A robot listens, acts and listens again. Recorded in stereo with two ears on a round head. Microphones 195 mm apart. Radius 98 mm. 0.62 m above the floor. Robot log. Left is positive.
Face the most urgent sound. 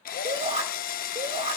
note: The shout: about 30° right or 150° right.
cmd yaw -30
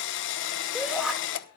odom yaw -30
end: Found it: a shout, straight ahead, 1 to 2 m away.